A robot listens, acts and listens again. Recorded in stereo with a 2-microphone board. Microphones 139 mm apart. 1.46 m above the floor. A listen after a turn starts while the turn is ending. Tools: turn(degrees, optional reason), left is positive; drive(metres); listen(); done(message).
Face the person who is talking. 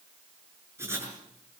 listen()
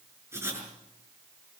listen()
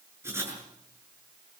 done("I can't make out anyone speaking to turn to.")